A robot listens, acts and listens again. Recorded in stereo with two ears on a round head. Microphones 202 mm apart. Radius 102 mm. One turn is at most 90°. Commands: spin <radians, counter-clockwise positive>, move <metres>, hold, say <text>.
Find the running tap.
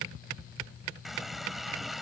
spin 0.52
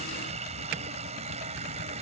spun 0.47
spin -0.52
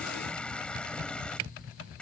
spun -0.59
say Facing the running tap.